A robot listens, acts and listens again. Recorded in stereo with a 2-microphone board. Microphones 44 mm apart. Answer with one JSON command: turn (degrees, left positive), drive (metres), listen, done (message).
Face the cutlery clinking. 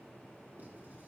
{"listen": true}
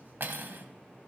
{"turn": -55}
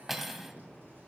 {"done": "Facing the cutlery clinking, 1 to 2 m away."}